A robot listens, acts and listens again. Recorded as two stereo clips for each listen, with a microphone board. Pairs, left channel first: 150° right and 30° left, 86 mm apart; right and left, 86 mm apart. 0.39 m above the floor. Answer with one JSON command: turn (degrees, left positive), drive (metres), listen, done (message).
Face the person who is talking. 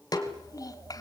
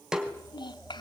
{"turn": -110}
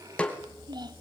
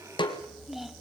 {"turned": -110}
{"done": "Found it: a child speaking, straight ahead, 1 to 2 m away."}